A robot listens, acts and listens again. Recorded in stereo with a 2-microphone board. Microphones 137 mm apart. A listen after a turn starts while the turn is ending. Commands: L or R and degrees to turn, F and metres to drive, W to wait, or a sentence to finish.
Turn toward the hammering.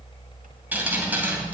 W
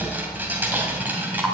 W
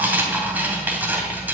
I can't make out hammering to turn to.